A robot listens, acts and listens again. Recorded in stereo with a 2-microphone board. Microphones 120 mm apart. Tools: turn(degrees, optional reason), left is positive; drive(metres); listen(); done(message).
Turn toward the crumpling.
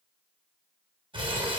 turn(degrees=-50, reason="The crumpling: about 50° right or 130° right.")
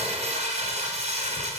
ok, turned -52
turn(degrees=-80, reason="So it is at 80° right.")
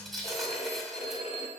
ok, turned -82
done("Facing the crumpling, 2 to 4 m away.")